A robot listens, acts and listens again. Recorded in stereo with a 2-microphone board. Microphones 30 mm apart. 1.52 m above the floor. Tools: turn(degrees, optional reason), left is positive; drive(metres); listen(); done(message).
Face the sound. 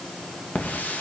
turn(degrees=90)
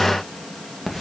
done("Facing the hiss.")